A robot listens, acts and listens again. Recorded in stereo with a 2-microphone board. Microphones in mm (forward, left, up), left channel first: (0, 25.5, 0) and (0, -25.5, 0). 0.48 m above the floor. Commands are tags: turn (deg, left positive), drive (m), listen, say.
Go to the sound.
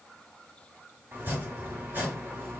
<turn deg="-35"/>
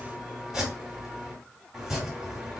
<drive m="1.0"/>
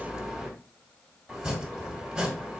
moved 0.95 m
<turn deg="-10"/>
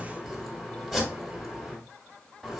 <drive m="1.0"/>
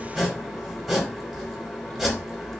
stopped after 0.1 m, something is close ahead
<say>I am next to the chopping.</say>